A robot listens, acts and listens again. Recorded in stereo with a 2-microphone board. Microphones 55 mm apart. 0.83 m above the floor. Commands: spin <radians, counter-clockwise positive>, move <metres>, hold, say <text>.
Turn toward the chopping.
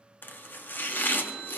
spin 0.70
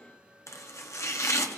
spin 1.75
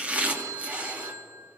spin -0.52
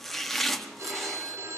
say Found it: chopping, straight ahead.